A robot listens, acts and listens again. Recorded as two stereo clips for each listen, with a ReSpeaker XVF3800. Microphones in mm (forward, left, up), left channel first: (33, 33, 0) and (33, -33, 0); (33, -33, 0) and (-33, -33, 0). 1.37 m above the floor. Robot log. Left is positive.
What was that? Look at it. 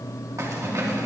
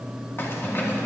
note: The keys jangling: 55° right.
cmd yaw -55
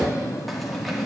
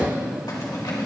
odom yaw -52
cmd idle
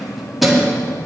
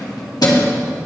end: Found it: keys jangling, straight ahead.